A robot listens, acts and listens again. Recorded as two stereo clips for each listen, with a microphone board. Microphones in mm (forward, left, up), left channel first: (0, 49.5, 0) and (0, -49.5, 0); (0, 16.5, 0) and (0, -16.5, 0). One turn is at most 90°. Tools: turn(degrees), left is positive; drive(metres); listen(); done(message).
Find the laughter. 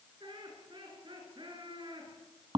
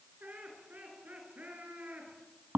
turn(degrees=-55)
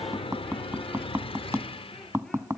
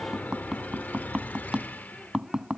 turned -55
listen()
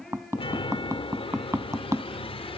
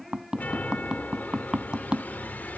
done("Found it: laughter, straight ahead.")